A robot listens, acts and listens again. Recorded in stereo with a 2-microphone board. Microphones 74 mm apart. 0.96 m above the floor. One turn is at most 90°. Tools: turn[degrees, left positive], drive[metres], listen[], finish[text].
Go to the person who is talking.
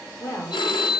Thought: The woman speaking: about 45° left or 135° left.
Action: turn[45]
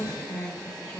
Action: drive[1.0]
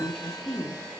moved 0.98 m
Action: drive[1.0]
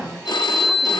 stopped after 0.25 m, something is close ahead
Action: finish[I am next to the woman speaking.]